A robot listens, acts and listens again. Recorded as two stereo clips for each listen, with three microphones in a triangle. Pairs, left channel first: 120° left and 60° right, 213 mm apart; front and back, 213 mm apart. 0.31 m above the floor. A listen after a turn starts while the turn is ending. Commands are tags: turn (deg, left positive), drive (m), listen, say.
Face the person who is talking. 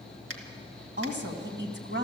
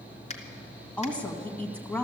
<turn deg="-85"/>
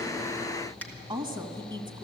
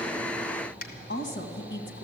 <say>Found it: a woman speaking, straight ahead, 1 to 2 m away.</say>